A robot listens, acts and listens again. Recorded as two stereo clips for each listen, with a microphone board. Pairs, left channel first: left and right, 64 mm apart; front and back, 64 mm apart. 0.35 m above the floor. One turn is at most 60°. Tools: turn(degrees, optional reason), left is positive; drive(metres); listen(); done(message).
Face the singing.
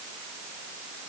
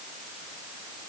listen()
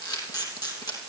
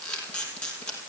listen()
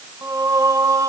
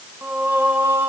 turn(degrees=-60, reason="The singing: 125° right.")
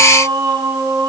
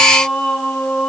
turn(degrees=-60, reason="The singing is now 80° right.")
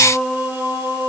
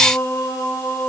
turn(degrees=-30, reason="The singing is now 30° right.")
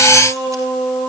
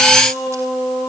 done("Facing the singing.")